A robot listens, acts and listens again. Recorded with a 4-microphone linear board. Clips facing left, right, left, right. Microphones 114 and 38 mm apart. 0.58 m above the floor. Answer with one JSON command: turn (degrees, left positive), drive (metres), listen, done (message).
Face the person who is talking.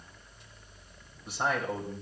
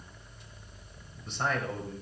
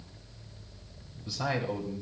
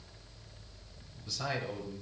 {"turn": 30}
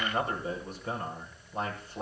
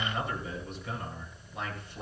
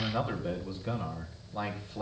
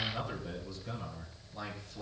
{"turn": 140}
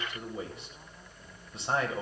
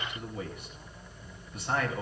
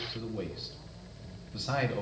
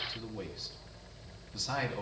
{"turn": 30}
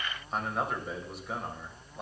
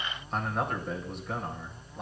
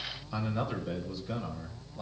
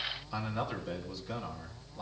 {"done": "Found it: a man speaking, straight ahead, 2 to 4 m away."}